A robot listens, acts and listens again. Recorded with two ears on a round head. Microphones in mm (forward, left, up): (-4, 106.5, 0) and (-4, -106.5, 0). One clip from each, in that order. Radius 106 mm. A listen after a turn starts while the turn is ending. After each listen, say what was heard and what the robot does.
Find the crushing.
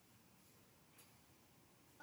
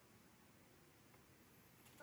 Keep listening.
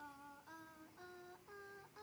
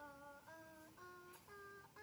Keep listening.
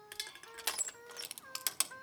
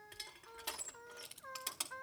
The crushing: about 55° left or 125° left. Turn 55° left.
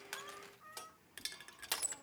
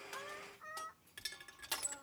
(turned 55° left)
So it is at 15° left. Turn 15° left.
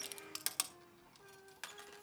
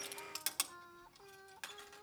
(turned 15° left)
Found it: crushing, straight ahead.